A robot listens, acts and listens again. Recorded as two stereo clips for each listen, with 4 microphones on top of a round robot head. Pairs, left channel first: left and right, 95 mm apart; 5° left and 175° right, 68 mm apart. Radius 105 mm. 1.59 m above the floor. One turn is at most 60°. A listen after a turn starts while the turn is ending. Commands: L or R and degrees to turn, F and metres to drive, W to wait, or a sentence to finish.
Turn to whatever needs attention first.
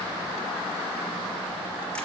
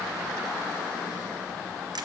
W
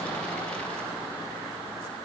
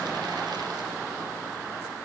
W
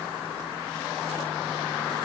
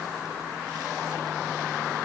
I can't make out anything urgent to turn to.